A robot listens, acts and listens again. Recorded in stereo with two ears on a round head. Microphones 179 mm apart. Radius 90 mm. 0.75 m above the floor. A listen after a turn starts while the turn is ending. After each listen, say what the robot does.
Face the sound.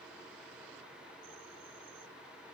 Keep listening.
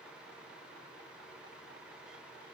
Keep listening.
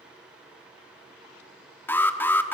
Turn 30° left.
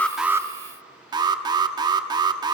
Turn 20° right.
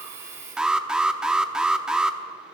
Found it: an alarm, straight ahead.